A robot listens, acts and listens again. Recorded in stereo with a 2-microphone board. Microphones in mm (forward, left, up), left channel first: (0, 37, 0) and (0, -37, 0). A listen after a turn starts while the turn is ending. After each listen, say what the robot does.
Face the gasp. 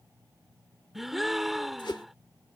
Turn 30° right.
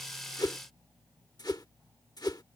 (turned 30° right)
Keep listening.
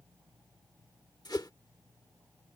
I heard a gasp, but can't make it out now. It was about 25° left or 145° right.